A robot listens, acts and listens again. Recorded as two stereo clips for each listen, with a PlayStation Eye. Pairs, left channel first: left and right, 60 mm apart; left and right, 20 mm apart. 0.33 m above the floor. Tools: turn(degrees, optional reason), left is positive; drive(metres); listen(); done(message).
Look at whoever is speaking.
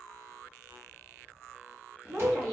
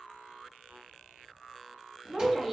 turn(degrees=-50, reason="The woman speaking: about 50° right or 130° right.")
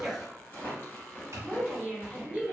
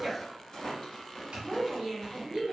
turn(degrees=-15, reason="So it is at 15° right.")
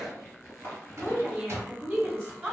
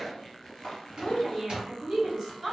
done("Found it: a woman speaking, straight ahead, 1 to 2 m away.")